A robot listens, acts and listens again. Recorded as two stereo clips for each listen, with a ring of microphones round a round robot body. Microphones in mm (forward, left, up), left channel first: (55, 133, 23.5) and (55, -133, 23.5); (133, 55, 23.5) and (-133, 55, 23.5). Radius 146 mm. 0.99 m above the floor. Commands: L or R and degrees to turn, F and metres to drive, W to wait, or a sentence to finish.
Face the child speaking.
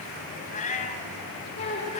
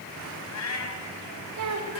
L160
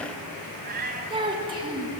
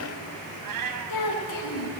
R20
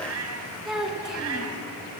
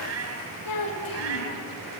Found it: a child speaking, straight ahead, over 4 m away.